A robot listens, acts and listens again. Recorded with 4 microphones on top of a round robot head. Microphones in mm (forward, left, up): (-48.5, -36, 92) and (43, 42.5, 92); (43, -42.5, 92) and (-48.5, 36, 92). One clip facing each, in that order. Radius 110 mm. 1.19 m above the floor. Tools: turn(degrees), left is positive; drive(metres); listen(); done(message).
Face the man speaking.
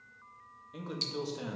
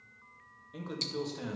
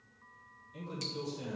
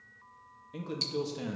turn(degrees=140)
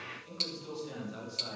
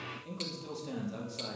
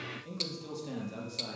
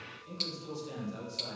done("Found it: a man speaking, straight ahead, 2 to 4 m away.")